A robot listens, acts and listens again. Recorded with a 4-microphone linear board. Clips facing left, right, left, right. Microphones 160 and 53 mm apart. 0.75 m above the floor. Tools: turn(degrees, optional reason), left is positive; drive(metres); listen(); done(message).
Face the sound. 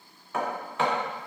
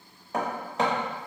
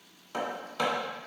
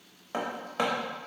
turn(degrees=-35, reason="The hammering: about 35° right or 145° right.")
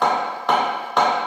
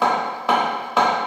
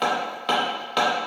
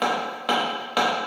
done("Found it: hammering, straight ahead.")